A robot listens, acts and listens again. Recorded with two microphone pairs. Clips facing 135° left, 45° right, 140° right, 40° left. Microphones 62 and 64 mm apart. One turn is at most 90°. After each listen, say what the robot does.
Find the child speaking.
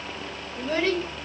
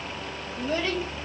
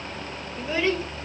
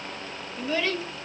Turn 90° left.
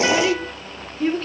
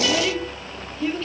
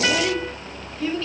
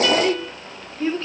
Turn 90° left.
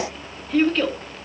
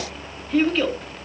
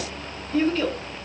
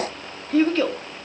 Turn 40° left.
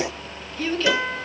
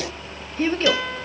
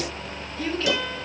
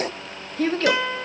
Turn 10° left.
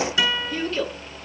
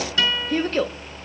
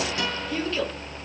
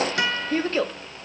Facing the child speaking.